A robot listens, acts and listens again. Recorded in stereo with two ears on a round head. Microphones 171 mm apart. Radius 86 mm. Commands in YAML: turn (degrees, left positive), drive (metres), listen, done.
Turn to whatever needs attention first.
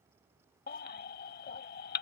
turn: 50
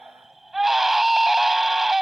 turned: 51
done: "Facing the baby crying."